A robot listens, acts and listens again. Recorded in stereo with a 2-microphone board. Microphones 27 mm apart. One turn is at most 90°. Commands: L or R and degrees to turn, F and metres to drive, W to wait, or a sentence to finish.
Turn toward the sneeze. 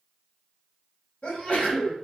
L50
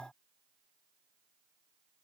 W
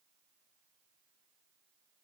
I heard a sneeze, but can't make it out now. It was about straight ahead or 80° left.